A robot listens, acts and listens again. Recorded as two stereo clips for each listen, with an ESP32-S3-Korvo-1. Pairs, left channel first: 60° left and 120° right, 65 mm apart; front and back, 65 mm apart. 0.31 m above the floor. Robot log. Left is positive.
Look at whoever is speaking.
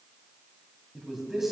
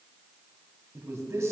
note: The man speaking: 155° left.
cmd yaw +155
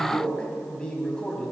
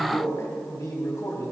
note: The man speaking is now 10° right.
cmd yaw -10
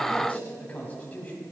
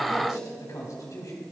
end: Facing the man speaking.